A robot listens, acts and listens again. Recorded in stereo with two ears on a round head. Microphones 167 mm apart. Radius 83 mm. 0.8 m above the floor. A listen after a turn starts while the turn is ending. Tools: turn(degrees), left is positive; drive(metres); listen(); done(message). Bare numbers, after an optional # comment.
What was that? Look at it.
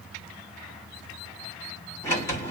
# The sliding door: about 15° left or 165° left.
turn(15)
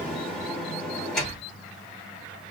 done("Found it: a sliding door, straight ahead.")